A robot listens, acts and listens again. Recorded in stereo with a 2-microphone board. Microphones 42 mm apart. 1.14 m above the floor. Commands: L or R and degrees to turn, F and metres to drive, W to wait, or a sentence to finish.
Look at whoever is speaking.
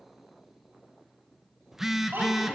R55
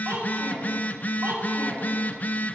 R60
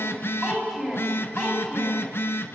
R10
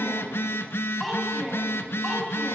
Found it: a child speaking, straight ahead.